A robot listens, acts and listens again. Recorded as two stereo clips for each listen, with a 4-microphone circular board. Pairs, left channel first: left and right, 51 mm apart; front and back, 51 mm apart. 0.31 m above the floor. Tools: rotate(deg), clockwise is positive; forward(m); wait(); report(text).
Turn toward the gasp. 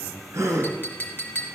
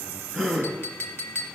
rotate(80)
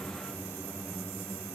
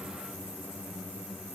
report("Facing where the gasp came from. I can't hear it now.")